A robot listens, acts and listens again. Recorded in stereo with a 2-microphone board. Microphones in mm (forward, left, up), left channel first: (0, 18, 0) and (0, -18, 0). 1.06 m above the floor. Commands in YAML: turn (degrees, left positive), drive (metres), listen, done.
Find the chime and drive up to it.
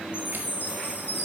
turn: 90
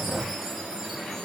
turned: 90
listen: true
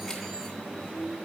listen: true
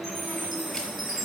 drive: 1.0
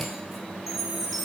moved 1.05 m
drive: 1.0
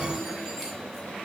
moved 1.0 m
listen: true
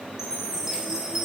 turn: -15
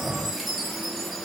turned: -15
drive: 1.0
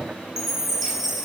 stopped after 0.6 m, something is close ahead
turn: -10
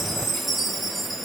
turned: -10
done: "I am next to the chime."